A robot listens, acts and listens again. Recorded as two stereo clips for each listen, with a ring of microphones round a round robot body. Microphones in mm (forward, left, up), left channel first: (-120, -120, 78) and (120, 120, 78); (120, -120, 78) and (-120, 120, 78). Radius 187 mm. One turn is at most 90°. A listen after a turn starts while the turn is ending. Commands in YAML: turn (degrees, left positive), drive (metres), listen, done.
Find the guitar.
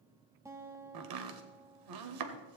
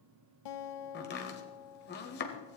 turn: -35
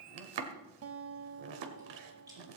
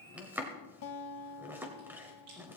done: "Facing the guitar."